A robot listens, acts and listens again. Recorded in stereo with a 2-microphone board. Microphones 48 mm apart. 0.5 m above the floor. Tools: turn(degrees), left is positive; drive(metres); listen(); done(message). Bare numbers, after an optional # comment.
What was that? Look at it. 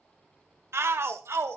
# The shout: about 60° right or 120° right.
turn(-60)
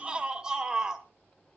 # So it is at 15° right.
turn(-15)
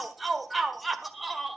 done("Facing the shout, 1 to 2 m away.")